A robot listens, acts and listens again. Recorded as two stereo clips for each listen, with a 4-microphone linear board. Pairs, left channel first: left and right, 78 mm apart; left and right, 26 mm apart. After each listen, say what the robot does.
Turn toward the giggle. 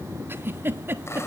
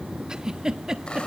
Turn 30° right.
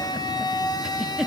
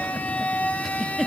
Facing the giggle, 1 to 2 m away.